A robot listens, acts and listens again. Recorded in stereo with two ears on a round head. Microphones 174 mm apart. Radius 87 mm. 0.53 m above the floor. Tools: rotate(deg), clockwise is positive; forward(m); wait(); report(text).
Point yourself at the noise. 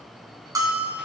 rotate(20)
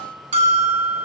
rotate(145)
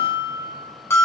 rotate(-15)
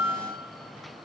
report("Found it: a bell, straight ahead, 1 to 2 m away.")